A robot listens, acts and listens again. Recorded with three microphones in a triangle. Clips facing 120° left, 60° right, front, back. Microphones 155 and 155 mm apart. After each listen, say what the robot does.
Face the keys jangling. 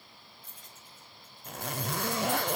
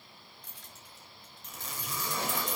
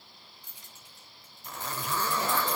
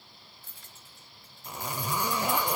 Turn 75° right.
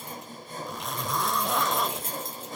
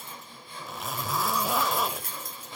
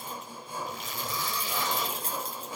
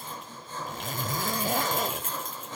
Turn 55° left.
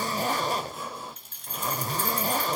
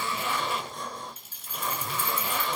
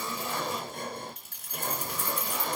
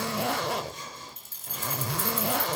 Turn 25° left.
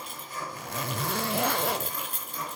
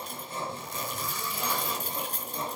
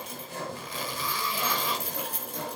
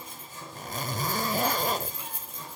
Turn 10° right.
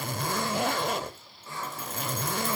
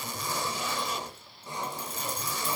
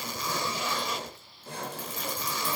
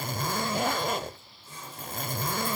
Keep listening.
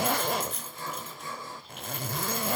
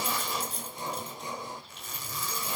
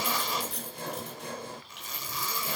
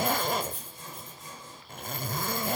Found it: keys jangling, straight ahead, over 4 m away.